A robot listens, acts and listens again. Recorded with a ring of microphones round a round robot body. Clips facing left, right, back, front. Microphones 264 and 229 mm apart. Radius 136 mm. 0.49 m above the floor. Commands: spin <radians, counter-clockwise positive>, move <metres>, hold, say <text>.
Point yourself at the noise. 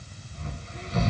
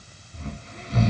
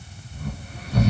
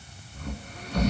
spin -1.75
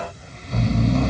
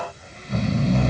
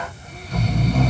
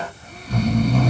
say Found it: snoring, straight ahead.